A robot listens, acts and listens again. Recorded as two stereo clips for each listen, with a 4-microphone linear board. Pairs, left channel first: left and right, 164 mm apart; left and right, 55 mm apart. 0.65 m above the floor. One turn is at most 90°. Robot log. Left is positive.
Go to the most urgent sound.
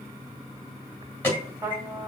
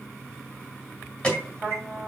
cmd yaw +30
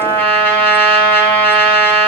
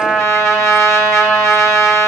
cmd idle
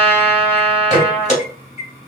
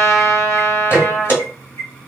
note: So it is at 135° left.
cmd yaw +90
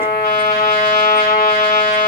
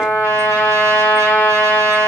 note: Nothing new. It was at 45° left.
cmd yaw +45
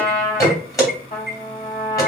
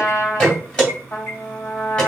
note: The alarm is now 20° left.
cmd yaw +20
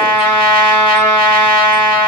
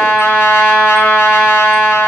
cmd idle
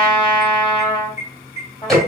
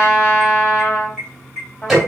cmd fwd 1.0
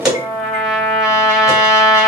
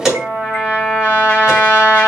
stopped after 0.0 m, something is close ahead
end: Something is in my way. I am facing the alarm but have not reached it.